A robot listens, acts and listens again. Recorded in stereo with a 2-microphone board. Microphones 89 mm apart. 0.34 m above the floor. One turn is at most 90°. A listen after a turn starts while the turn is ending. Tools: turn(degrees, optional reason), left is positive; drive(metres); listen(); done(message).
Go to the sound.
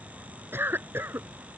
turn(degrees=-25, reason="The cough: about 25° right or 155° right.")
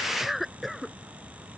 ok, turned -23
drive(metres=1.0)
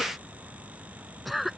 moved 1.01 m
drive(metres=1.0)
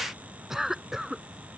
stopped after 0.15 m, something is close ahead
done("Something is in my way. I am facing the cough but have not reached it.")